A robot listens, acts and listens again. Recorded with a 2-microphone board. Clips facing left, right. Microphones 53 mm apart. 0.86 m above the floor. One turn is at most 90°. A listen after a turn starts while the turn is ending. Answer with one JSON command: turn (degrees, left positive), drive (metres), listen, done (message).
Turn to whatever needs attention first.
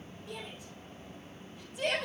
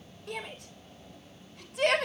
{"turn": -90}
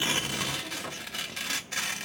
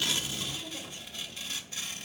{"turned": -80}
{"turn": -10}
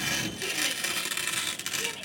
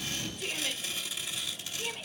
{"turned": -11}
{"listen": true}
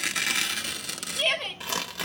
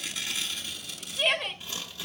{"done": "Facing the shout, 2 to 4 m away."}